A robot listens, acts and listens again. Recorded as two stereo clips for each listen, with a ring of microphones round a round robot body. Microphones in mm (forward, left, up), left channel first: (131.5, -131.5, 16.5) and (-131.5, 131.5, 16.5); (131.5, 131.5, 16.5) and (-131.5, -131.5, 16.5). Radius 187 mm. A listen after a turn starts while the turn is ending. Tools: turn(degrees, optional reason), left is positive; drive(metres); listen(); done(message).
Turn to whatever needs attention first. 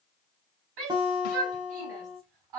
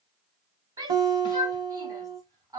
turn(degrees=145, reason="The shout: 145° left.")
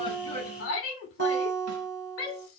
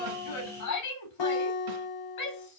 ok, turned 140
done("Found it: a shout, straight ahead.")